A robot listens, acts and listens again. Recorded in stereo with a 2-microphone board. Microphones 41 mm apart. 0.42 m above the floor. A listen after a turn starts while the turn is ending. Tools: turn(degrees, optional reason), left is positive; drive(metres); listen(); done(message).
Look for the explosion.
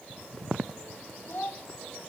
listen()
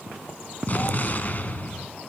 turn(degrees=45, reason="The explosion: about 45° left or 135° left.")
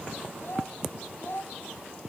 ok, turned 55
listen()
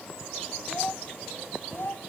done("I heard an explosion, but can't make it out now. It was about 10° right or 80° left.")